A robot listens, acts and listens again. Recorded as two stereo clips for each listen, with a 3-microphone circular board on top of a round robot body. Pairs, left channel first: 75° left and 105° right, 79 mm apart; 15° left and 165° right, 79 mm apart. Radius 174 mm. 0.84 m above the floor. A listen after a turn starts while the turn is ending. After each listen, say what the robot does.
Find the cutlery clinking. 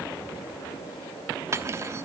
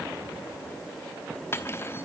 Turn 50° right.
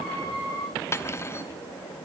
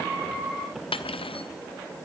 Turn 15° left.
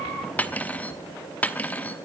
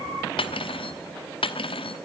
Facing the cutlery clinking.